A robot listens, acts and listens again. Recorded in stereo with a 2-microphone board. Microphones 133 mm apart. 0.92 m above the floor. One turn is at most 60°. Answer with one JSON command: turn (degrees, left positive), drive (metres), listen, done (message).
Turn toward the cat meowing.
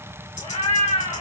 {"turn": 45}
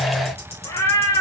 {"turn": 30}
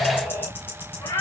{"turn": 30}
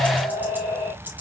{"turn": 20}
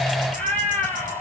{"turn": 10}
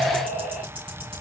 {"done": "Found it: a cat meowing, straight ahead."}